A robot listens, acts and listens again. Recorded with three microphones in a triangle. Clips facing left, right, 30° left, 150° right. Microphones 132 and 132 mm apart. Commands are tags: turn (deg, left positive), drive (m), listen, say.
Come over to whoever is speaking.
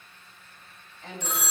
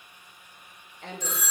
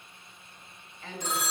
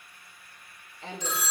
<turn deg="-95"/>
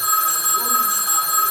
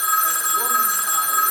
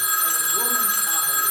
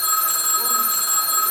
<listen/>
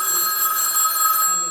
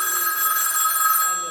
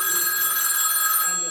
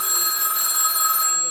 <listen/>
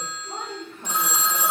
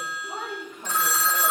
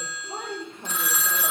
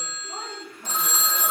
<drive m="1.0"/>
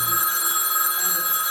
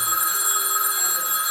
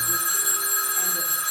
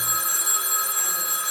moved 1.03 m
<listen/>
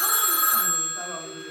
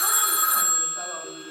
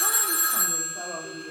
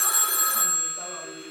<listen/>
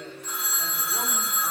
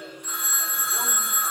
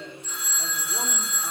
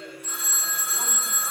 <say>I heard a woman speaking from this way, but can't make it out now. I did not reach it.</say>